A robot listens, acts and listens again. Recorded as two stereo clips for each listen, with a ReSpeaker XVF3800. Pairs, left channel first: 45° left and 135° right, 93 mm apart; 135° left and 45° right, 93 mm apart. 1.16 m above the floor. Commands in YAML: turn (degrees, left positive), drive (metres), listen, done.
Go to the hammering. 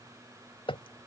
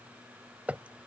turn: 30
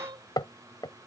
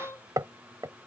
drive: 1.0
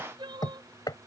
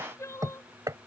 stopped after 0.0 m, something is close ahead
done: "Blocked. The hammering is further on, straight ahead."